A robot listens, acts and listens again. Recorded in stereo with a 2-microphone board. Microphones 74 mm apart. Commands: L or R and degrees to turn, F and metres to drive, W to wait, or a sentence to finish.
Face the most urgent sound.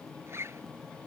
W
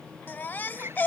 L30
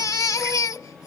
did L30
L125
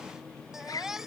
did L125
Found it: a baby crying, straight ahead.